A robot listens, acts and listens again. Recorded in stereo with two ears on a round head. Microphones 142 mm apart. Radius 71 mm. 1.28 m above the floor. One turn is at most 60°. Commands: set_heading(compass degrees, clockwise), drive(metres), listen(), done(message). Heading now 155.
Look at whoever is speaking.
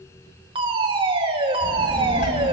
set_heading(95)
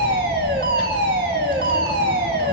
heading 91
set_heading(66)
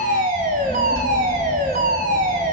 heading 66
done("Found it: a child speaking, straight ahead.")